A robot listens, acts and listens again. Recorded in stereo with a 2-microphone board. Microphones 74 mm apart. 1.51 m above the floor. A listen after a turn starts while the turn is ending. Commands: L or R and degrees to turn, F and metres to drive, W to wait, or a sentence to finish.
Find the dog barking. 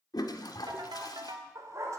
R45
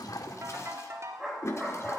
Found it: a dog barking, straight ahead, 2 to 4 m away.